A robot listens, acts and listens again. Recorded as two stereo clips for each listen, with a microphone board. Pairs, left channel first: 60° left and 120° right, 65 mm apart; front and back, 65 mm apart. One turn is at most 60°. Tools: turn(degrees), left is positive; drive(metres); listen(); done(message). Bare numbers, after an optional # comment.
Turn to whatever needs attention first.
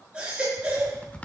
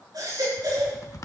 # The baby crying: 165° left.
turn(60)
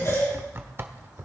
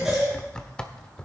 # The baby crying is now 95° left.
turn(60)
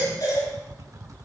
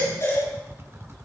# The baby crying is now 35° left.
turn(35)
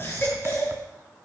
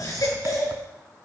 done("Found it: a baby crying, straight ahead, over 4 m away.")